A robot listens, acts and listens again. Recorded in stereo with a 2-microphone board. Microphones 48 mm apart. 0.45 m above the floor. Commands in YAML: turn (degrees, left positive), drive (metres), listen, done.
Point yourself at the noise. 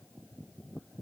listen: true
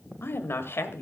turn: 60
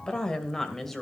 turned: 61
done: "Facing the woman speaking, 2 to 4 m away."